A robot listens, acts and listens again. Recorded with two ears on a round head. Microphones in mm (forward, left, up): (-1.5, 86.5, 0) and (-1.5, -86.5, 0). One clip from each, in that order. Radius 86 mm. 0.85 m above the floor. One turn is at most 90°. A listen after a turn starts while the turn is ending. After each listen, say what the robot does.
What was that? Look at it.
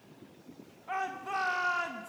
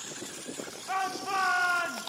Turn 30° right.
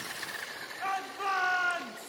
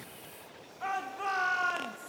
Turn 20° left.
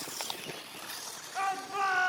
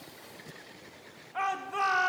Facing the shout.